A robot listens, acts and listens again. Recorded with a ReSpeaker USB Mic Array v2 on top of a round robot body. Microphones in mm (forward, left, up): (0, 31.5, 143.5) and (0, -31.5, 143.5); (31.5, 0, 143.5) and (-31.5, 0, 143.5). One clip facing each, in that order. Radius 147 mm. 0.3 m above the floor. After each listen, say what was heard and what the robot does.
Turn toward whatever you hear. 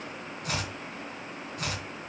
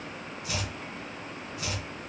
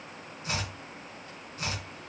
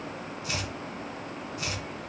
The chopping: 55° left. Turn 55° left.
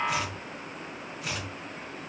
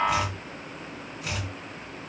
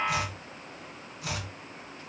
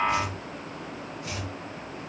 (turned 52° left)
Found it: chopping, straight ahead, 2 to 4 m away.